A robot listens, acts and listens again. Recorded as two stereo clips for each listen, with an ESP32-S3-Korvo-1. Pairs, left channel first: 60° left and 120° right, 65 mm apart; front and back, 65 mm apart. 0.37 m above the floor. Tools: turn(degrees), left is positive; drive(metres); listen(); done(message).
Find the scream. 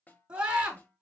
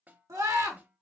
turn(degrees=175)
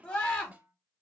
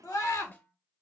done("Facing the scream.")